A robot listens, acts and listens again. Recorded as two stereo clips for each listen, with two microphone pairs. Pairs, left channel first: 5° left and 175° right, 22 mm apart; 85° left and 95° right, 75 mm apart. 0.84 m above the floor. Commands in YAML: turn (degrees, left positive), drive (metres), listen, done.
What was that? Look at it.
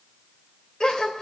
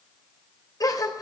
turn: 55
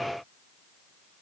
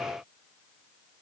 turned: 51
done: "I heard a gasp from this way, but can't make it out now."